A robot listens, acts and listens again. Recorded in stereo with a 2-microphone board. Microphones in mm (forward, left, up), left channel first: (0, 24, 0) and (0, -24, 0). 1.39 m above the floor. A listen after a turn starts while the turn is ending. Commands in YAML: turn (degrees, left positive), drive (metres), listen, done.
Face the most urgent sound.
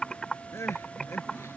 turn: 70
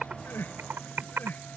turn: 40
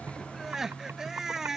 done: "Found it: crying, straight ahead."